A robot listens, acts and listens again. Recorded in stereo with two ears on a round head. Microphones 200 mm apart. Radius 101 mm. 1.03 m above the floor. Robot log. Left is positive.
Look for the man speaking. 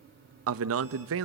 note: The man speaking: about 65° right or 115° right.
cmd yaw -65
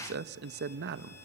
note: So it is at 45° right.
cmd yaw -45
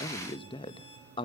note: The man speaking is now 20° left.
cmd yaw +20
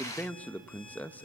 end: Facing the man speaking.